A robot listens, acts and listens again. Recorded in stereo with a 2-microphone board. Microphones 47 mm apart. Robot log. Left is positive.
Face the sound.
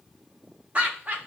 note: The laughter: about 35° right or 145° right.
cmd yaw -35
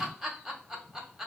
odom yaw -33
end: Found it: laughter, straight ahead, 1 to 2 m away.